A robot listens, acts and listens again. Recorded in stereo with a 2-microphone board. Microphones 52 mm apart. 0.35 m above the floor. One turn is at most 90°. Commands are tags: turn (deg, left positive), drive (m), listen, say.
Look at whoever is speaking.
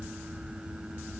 <listen/>
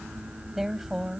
<turn deg="-30"/>
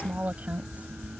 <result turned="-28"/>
<turn deg="-90"/>
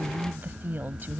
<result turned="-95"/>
<turn deg="-50"/>
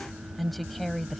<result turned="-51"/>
<say>Facing the woman speaking.</say>